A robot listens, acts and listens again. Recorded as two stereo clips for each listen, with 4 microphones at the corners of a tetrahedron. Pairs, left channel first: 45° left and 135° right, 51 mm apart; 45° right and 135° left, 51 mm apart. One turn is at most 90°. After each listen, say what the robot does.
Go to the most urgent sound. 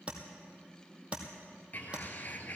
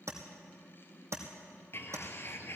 Keep listening.
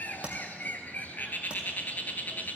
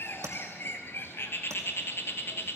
Keep listening.
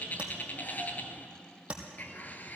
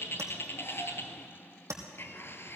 I can't make out anything urgent to turn to.